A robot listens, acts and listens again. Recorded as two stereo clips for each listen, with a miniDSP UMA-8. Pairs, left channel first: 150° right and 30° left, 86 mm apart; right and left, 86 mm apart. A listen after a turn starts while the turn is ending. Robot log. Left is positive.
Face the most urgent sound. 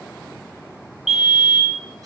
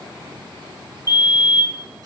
note: The fire alarm: 55° right.
cmd yaw -55
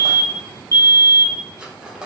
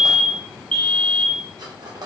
note: The fire alarm is now 15° right.
cmd yaw -15
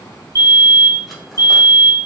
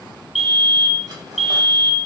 end: Found it: a fire alarm, straight ahead, 1 to 2 m away.